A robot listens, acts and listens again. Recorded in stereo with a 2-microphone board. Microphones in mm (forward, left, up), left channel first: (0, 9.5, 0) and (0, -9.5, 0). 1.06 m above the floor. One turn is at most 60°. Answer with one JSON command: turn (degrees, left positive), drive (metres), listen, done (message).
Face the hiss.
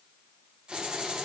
{"turn": -60}
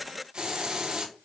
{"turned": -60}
{"turn": -55}
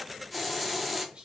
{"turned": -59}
{"done": "Facing the hiss."}